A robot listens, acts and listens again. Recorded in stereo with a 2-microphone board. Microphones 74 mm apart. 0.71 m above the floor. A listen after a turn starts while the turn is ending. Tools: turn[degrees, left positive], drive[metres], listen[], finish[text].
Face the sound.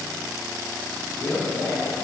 Thought: The man speaking: about 35° left or 145° left.
Action: turn[35]
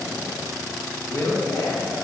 Thought: The man speaking: about 30° left or 150° left.
Action: turn[30]
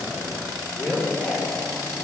Thought: So it is at 25° left.
Action: turn[25]
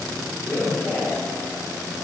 Thought: The man speaking is now 20° left.
Action: turn[20]
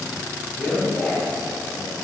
Action: finish[Facing the man speaking, 2 to 4 m away.]